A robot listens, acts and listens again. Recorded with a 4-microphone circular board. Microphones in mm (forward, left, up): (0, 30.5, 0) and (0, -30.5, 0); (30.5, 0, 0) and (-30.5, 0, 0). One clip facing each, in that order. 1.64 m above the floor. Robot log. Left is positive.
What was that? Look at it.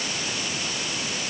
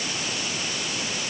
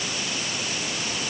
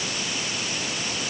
cmd idle
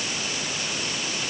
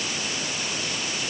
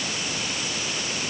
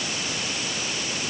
cmd idle
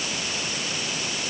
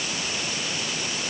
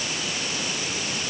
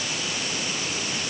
end: I can't make out anything.